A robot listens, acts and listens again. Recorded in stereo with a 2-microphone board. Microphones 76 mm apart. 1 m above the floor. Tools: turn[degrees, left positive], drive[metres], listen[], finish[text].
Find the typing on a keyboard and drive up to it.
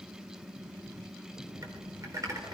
Thought: The typing on a keyboard: about 50° right or 130° right.
Action: turn[-50]
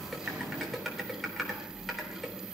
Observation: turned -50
Action: drive[1.0]
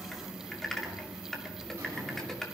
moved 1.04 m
Action: drive[1.0]
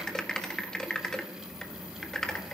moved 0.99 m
Thought: The typing on a keyboard is now 10° left.
Action: turn[10]
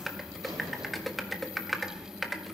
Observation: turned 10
Action: drive[1.0]
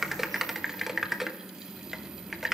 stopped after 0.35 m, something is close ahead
Action: finish[Arrived at the typing on a keyboard, straight ahead.]